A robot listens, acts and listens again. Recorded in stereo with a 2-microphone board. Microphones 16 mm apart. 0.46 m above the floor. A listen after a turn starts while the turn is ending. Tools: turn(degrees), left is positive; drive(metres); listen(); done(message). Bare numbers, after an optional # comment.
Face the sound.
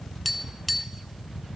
turn(-30)
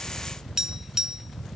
# So it is at 150° right.
turn(-150)
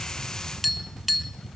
done("Facing the tapping, 1 to 2 m away.")